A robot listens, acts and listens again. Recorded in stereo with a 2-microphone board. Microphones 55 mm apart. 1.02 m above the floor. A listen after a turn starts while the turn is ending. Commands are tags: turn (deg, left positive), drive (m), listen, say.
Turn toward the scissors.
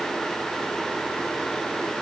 <listen/>
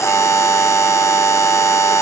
<listen/>
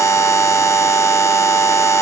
<say>I can't make out scissors to turn to.</say>